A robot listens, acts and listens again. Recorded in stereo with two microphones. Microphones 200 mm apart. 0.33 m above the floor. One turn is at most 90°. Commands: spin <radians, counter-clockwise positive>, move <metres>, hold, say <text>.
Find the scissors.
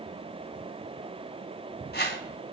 hold
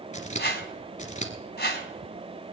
spin 0.61
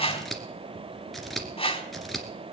say Found it: scissors, straight ahead.